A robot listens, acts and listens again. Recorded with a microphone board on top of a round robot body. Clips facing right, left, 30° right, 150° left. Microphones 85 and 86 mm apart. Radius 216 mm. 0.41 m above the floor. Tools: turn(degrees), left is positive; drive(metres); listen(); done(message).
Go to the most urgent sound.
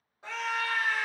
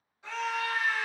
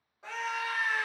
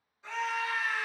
turn(degrees=-45)
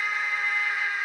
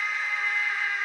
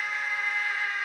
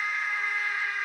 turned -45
drive(metres=1.0)
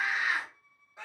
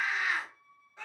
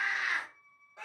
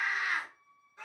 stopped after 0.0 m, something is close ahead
turn(degrees=-10)
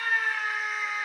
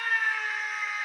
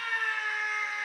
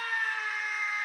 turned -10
done("Something is in my way. I am facing the scream but have not reached it.")